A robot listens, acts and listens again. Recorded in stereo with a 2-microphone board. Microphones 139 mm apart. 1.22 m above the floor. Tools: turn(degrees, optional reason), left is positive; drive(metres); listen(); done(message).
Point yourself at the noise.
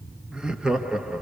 turn(degrees=-30)
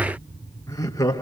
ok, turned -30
turn(degrees=25, reason="So it is at 25° left.")
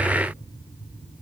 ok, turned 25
listen()
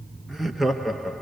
done("Facing the laughter.")